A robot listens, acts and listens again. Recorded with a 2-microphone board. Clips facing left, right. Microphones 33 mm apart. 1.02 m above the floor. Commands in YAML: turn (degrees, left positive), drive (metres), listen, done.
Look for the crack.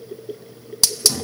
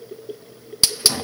listen: true
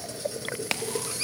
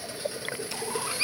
turn: 65
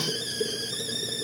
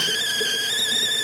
listen: true
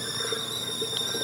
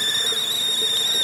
done: "I heard a crack, but can't make it out now. It was about straight ahead or 50° left."